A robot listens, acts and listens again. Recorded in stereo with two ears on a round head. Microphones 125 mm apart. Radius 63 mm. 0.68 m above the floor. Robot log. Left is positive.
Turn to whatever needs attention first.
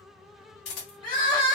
note: The crying: about 30° left or 150° left.
cmd yaw +30
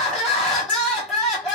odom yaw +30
end: Facing the crying.